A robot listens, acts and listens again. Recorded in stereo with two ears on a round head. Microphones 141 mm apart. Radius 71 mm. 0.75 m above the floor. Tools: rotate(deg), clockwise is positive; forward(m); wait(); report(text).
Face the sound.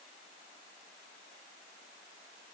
wait()
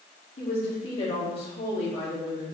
rotate(-35)
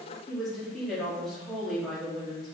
report("Facing the woman speaking, 1 to 2 m away.")